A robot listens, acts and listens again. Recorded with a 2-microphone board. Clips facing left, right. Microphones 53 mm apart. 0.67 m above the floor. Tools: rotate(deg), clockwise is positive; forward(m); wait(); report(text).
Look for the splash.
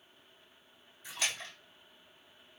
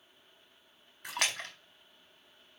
rotate(60)
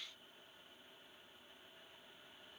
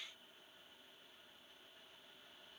wait()
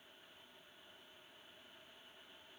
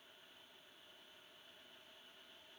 report("I heard a splash, but can't make it out now. It was about straight ahead or 60° right.")